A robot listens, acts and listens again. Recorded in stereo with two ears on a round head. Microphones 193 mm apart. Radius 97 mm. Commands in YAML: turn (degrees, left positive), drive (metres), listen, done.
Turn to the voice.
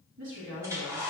turn: -70
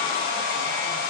listen: true
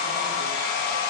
listen: true
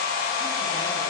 done: "I heard a woman speaking, but can't make it out now. It was about straight ahead or 40° right."